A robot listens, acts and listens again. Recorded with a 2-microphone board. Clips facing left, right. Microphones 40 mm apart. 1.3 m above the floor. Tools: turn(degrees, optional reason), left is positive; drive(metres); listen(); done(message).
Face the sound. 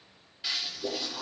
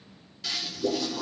turn(degrees=15, reason="The toilet flushing: about 15° left or 165° left.")
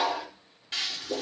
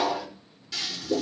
turn(degrees=145, reason="So it is at 145° left.")
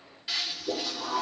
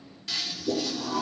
turn(degrees=15, reason="The toilet flushing is now 15° left.")
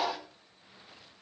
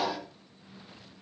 done("Facing the toilet flushing, 2 to 4 m away.")